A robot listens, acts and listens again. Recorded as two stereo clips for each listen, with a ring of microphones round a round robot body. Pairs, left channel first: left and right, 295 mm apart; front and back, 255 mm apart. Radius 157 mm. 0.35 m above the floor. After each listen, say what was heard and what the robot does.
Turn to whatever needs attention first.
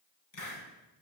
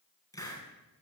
Keep listening.
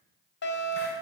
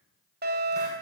The fire alarm: 135° left. Turn 135° left.
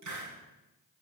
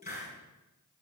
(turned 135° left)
Found it: a fire alarm, straight ahead, 2 to 4 m away.